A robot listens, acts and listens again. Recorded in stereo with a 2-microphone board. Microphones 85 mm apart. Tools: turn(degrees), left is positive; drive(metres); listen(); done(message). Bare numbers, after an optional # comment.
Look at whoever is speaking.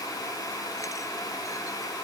listen()
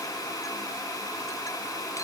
listen()
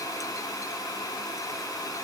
done("I can't make out anyone speaking to turn to.")